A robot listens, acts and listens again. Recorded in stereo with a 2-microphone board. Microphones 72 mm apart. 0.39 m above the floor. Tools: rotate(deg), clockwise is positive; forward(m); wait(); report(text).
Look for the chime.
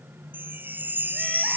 rotate(25)
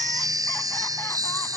rotate(125)
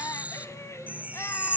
rotate(20)
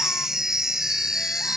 report("Facing the chime.")